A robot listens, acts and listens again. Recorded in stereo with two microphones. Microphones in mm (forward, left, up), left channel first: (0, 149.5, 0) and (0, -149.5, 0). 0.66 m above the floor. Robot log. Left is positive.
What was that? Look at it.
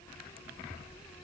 cmd idle
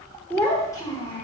note: The child speaking: about 20° left or 160° left.
cmd yaw +20
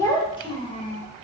note: The child speaking: about 25° left or 155° left.
cmd yaw +25
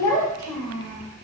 note: The child speaking: about 15° left or 165° left.
cmd yaw +15
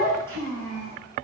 cmd yaw +30
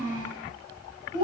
note: So it is at 15° right.
cmd yaw -15
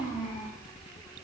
end: Facing the child speaking.